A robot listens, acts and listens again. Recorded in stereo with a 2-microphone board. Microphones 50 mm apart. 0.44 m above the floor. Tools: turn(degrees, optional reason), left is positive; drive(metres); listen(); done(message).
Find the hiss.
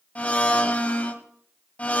listen()
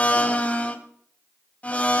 listen()
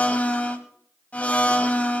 done("I can't make out a hiss to turn to.")